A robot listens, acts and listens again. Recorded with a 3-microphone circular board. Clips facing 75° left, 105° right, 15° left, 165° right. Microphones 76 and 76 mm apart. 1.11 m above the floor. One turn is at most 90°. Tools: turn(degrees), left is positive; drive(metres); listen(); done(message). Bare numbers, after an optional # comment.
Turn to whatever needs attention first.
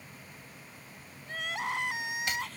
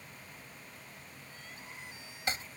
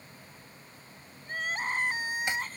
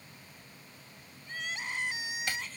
# The crying: 65° left.
turn(65)
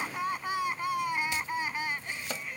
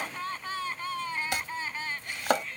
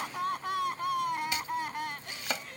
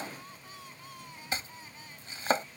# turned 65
done("Facing the crying.")